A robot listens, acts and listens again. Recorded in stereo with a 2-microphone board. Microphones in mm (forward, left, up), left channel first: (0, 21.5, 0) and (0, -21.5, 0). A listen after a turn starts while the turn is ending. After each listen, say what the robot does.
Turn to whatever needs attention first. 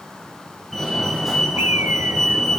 Turn 30° left.
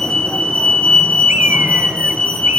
Turn 150° left.
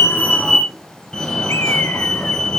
Turn 20° left.
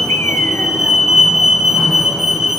Facing the fire alarm, 2 to 4 m away.